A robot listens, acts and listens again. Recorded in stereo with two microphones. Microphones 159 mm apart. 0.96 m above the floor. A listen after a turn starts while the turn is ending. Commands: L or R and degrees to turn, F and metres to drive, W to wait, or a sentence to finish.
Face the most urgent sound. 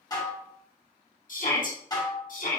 L60
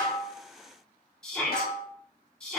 Facing the shout.